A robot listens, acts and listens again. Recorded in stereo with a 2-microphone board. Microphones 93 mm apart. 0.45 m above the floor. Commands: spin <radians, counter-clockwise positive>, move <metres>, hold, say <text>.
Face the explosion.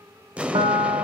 spin -0.52
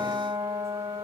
hold
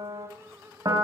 say I heard an explosion, but can't make it out now. It was about 15° left or 135° right.